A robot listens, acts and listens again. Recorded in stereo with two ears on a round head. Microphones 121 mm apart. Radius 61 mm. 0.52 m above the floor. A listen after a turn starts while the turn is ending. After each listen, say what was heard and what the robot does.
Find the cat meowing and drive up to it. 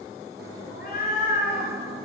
The cat meowing: about 65° left or 115° left. Turn 65° left.
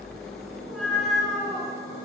Drive 1.0 m forward.
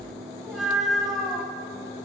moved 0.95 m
Drive 1.0 m forward.
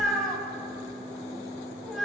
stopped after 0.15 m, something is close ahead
Arrived at the cat meowing, straight ahead.